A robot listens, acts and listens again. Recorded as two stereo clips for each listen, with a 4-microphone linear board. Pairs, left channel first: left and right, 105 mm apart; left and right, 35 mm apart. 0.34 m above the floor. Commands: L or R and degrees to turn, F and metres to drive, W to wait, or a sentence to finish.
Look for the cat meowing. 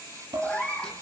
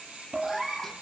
L30
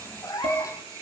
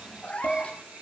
L145
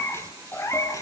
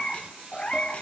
L30
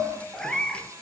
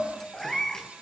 L10
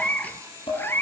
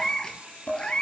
L20
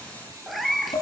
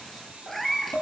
Facing the cat meowing, 2 to 4 m away.